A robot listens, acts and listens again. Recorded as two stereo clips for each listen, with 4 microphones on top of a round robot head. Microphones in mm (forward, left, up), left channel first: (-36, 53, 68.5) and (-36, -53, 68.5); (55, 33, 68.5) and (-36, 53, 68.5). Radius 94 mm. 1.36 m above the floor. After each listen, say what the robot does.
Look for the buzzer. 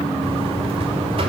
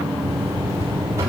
Turn 125° right.
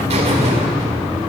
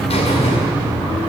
Turn 50° right.
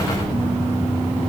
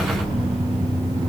Turn 15° right.
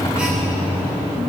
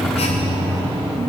Facing the buzzer.